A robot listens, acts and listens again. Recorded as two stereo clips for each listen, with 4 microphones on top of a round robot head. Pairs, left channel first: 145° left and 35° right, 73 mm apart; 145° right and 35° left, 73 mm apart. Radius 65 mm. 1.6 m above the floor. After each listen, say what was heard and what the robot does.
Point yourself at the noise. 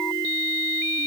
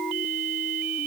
Keep listening.
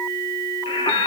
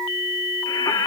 The singing: 170° left. Turn 170° left.
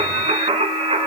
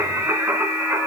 The singing is now 35° right. Turn 35° right.
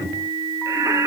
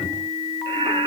The singing is now 15° left. Turn 15° left.
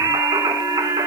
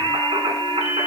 The singing is now 10° left. Turn 10° left.
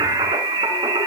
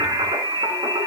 Found it: singing, straight ahead, 2 to 4 m away.